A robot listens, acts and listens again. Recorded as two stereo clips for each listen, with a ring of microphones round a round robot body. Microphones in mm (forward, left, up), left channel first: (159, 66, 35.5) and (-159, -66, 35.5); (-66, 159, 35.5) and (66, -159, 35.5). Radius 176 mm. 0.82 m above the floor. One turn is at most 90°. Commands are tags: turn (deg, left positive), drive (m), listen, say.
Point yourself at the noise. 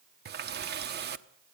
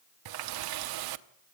<turn deg="-90"/>
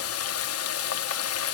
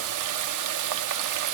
<turn deg="-30"/>
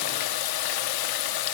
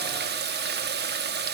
<say>Found it: a running tap, straight ahead.</say>